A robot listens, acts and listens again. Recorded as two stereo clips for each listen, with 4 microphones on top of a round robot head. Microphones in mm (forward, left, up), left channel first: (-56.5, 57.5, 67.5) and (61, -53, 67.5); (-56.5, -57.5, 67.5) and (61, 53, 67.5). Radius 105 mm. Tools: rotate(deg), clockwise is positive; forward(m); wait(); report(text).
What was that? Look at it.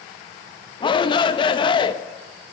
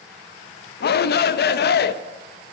rotate(160)
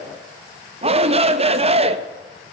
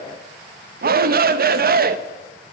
rotate(-10)
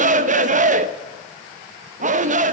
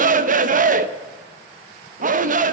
report("Found it: a shout, straight ahead, under 1 m away.")